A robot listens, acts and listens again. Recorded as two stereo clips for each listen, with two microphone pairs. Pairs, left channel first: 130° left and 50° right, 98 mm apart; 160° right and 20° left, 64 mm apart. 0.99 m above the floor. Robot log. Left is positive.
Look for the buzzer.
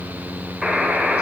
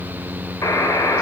note: The buzzer: 135° right.
cmd yaw -135
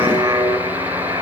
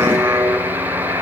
end: Facing the buzzer.